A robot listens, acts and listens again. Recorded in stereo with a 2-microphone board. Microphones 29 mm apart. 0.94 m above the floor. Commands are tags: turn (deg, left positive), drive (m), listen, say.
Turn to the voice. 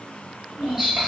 <turn deg="-90"/>
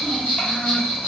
<listen/>
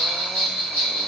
<listen/>
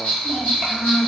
<turn deg="10"/>
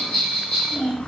<say>Found it: a child speaking, straight ahead, 1 to 2 m away.</say>